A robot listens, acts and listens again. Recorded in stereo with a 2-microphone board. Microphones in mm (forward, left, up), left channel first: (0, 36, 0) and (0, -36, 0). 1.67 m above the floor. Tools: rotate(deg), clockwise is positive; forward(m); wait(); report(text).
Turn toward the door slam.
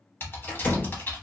rotate(-25)
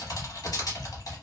wait()
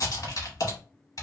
report("I heard a door slam, but can't make it out now. It was about straight ahead or 130° left.")